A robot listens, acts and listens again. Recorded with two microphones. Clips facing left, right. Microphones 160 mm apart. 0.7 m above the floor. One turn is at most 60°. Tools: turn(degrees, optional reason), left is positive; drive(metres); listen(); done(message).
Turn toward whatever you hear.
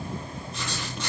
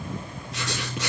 turn(degrees=-60)
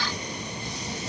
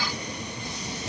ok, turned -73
turn(degrees=-15, reason="Nothing new. It was at 15° right.")
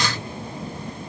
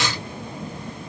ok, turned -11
done("Facing the writing.")